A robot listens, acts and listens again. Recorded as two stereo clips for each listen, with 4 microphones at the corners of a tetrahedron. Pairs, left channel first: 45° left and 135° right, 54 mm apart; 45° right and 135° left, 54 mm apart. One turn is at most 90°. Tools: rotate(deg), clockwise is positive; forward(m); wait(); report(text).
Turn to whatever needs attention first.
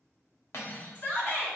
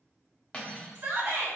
rotate(-90)
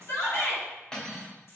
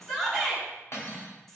rotate(-40)
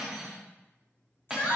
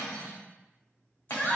rotate(-10)
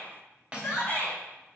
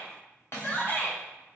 report("Facing the shout.")